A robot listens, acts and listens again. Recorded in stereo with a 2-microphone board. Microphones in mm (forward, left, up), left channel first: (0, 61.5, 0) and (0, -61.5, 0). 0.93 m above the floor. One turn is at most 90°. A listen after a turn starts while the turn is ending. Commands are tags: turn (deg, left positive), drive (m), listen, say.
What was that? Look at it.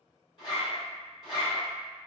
<turn deg="40"/>
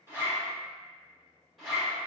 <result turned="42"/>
<say>Facing the zipper.</say>